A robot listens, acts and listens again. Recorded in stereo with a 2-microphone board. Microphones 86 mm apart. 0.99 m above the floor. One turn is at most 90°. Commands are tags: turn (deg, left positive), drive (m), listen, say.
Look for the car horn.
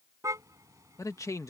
<turn deg="-35"/>
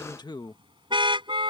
<turn deg="-90"/>
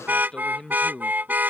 <turn deg="-20"/>
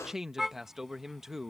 <say>Facing the car horn.</say>